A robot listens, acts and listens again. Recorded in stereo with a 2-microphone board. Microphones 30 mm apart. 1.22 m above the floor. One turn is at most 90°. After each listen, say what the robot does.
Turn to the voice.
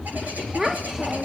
Turn 30° right.
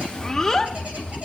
Turn 15° left.
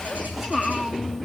Found it: a child speaking, straight ahead, 1 to 2 m away.